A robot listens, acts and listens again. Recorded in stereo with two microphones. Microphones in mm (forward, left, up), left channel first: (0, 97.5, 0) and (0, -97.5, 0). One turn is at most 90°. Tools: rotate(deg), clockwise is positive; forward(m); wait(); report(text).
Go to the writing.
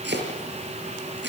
wait()
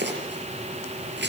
wait()
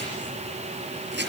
report("I can't make out writing, only chopping.")